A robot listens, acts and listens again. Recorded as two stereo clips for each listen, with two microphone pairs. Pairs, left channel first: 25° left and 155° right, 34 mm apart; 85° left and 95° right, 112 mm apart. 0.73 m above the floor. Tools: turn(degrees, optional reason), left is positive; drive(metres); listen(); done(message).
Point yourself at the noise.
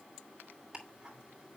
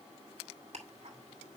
turn(degrees=-85, reason="The ticking: 85° right.")
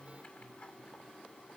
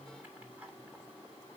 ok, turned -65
turn(degrees=-20, reason="The ticking is now 20° right.")
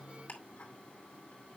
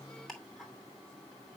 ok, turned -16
done("Facing the ticking, 2 to 4 m away.")